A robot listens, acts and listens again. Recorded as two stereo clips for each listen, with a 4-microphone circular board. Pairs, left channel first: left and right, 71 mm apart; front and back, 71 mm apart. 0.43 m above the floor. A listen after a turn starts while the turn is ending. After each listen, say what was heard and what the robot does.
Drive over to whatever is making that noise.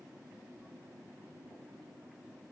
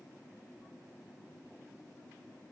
Keep listening.
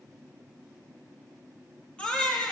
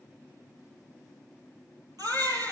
The baby crying: 160° left. Turn 160° left.
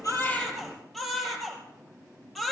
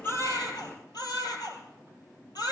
Drive 1.0 m forward.
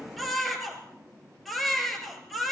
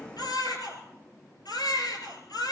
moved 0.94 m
Drive 1.0 m forward.
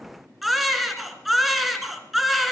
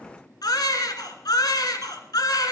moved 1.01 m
Drive 1.0 m forward.
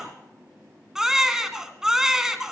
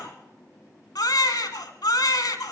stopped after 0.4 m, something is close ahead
The baby crying is now 10° right. Turn 10° right.
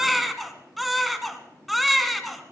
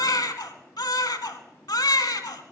I am next to the baby crying.